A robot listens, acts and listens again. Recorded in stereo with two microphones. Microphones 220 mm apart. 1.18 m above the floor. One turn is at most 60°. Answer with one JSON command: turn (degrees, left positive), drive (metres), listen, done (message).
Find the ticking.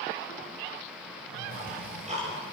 {"turn": -30}
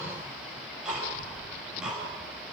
{"done": "Facing the ticking, over 4 m away."}